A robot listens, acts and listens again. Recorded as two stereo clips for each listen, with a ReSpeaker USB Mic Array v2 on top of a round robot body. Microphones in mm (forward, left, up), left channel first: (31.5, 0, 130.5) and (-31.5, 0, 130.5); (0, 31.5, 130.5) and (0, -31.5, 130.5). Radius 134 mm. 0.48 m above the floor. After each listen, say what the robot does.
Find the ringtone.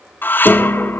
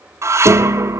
Keep listening.
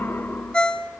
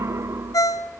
Turn 75° left.
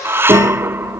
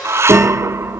Keep listening.
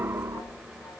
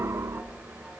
Keep listening.
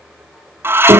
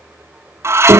Facing where the ringtone came from. I can't hear it now.